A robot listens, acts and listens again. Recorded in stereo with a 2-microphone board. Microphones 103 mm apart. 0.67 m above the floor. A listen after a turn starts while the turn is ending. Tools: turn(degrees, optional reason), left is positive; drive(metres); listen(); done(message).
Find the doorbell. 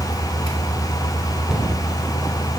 listen()
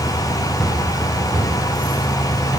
listen()
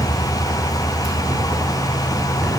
done("I can't make out a doorbell.")